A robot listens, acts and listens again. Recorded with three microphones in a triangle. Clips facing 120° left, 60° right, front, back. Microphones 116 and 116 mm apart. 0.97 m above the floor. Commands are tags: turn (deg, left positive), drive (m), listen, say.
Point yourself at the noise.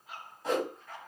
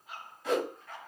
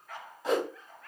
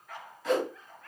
<turn deg="65"/>
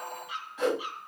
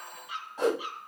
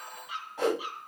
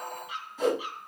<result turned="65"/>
<say>Found it: a whoosh, straight ahead.</say>